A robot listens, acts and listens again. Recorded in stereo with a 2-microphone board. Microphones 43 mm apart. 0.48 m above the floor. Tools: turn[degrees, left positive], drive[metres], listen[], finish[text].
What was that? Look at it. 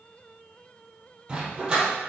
Thought: The dog barking: about 20° right or 160° right.
Action: turn[-20]
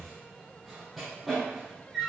Action: turn[-30]
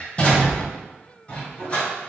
Thought: So it is at 25° left.
Action: turn[25]
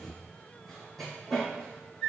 Action: finish[Found it: a dog barking, straight ahead.]